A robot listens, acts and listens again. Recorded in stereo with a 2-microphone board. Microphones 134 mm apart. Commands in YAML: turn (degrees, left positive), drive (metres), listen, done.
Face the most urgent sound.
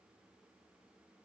listen: true
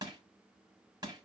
listen: true
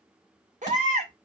turn: -70
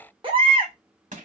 turn: -40
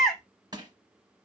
done: "Found it: a baby crying, straight ahead."